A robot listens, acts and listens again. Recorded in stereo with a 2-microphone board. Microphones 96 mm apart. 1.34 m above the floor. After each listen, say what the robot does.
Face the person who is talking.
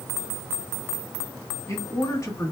Turn 35° left.
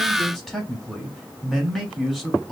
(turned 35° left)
Facing the man speaking.